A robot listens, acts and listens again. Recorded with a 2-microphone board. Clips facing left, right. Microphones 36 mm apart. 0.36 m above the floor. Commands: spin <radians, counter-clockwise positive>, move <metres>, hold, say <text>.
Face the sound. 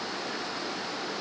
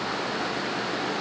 hold
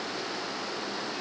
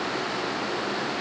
hold
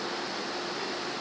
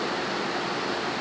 say I can't make out anything.